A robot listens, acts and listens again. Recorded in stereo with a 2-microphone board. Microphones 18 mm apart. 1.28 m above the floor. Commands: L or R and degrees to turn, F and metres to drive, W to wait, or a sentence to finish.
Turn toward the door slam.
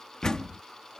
L45
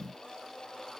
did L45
W
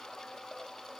I heard a door slam, but can't make it out now. It was about straight ahead or 90° left.